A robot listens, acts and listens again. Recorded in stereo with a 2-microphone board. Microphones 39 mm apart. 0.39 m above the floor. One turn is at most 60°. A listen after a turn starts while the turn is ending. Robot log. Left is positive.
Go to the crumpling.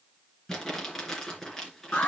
cmd yaw +30
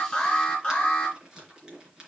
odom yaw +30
note: So it is at 15° right.
cmd yaw -15
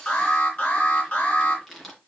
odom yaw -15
cmd fwd 1.0
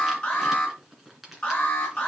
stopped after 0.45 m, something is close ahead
end: Blocked. The crumpling is further on, straight ahead.